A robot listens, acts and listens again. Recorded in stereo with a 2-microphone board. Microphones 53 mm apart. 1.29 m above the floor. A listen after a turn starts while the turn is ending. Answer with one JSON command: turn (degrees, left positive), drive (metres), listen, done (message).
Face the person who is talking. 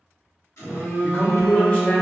{"turn": 30}
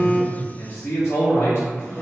{"turn": 115}
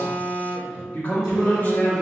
{"turn": 35}
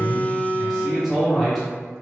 {"done": "Found it: a man speaking, straight ahead."}